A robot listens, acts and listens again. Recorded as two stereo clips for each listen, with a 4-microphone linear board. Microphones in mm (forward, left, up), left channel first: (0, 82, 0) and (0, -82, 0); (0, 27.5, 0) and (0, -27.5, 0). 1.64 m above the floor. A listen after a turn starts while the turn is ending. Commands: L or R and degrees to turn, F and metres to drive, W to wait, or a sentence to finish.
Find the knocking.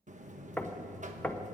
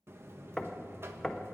L30
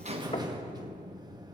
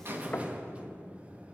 W
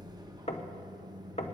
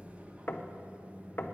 L135
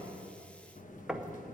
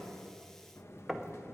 Found it: knocking, straight ahead, 1 to 2 m away.